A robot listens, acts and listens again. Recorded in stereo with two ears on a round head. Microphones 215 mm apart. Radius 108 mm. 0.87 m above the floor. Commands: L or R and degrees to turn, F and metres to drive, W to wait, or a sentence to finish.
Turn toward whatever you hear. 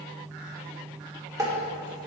R30
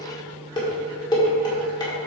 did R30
L15
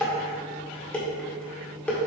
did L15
Facing the dishes clattering, 1 to 2 m away.